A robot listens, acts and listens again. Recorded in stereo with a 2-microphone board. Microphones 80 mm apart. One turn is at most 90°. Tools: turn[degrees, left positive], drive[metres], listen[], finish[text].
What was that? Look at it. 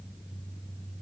Action: listen[]
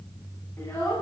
Thought: The child speaking: about 35° left or 145° left.
Action: turn[35]
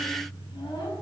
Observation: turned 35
Action: listen[]
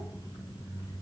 Action: listen[]
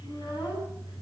Action: finish[I heard a child speaking, but can't make it out now. It was about straight ahead or 110° left.]